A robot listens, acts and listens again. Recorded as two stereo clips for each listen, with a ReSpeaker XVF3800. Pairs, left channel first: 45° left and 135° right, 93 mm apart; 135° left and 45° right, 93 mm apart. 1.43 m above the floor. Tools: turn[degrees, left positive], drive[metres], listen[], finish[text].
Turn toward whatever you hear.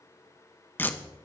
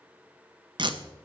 Thought: The tape being pulled: 20° right.
Action: turn[-20]
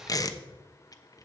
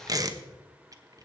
Action: finish[Facing the tape being pulled, under 1 m away.]